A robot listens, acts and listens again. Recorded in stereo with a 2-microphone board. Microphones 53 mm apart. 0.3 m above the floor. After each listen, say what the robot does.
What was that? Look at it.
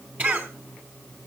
Turn 30° right.
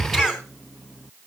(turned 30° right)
Turn 10° right.
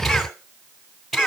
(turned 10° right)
Found it: a cough, straight ahead.